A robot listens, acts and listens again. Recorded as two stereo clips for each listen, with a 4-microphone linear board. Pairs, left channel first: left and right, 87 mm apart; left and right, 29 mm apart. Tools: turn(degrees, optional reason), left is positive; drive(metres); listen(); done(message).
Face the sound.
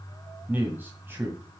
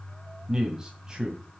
turn(degrees=-25, reason="The man speaking: about 25° right or 155° right.")
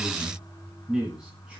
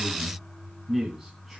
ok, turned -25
turn(degrees=-30)
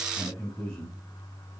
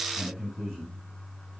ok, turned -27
turn(degrees=10, reason="So it is at 10° left.")
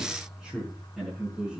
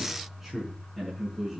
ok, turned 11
done("Facing the man speaking, over 4 m away.")